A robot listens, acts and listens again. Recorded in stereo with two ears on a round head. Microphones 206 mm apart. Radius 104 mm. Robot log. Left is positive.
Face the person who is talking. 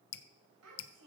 note: The child speaking: about 70° right or 110° right.
cmd yaw -70
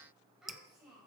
end: Facing the child speaking.